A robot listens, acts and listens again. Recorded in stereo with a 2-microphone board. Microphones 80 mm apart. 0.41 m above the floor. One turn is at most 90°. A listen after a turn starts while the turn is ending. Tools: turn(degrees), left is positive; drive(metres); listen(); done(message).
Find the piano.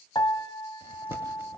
turn(degrees=70)
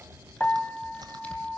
turn(degrees=20)
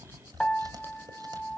turn(degrees=10)
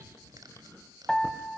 done("Found it: a piano, straight ahead.")